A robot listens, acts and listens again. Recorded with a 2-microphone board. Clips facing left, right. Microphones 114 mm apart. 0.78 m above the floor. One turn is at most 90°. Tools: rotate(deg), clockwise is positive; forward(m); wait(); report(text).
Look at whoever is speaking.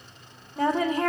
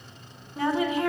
rotate(-40)
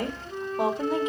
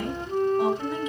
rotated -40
rotate(-90)
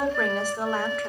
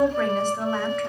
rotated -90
rotate(-10)
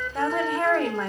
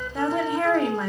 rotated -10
report("Facing the woman speaking, 1 to 2 m away.")